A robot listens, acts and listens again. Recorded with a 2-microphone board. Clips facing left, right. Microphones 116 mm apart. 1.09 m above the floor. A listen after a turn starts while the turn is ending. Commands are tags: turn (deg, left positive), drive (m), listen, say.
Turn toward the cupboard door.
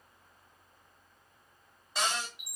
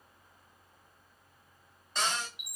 <turn deg="30"/>
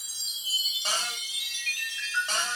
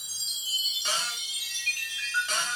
<turn deg="140"/>
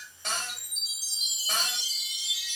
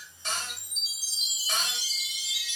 <listen/>
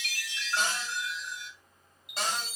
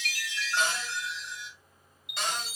<turn deg="45"/>
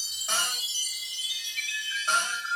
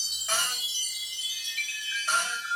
<turn deg="25"/>
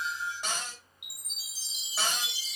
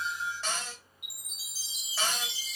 <turn deg="20"/>
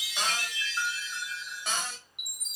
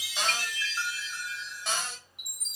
<say>Found it: a cupboard door, straight ahead.</say>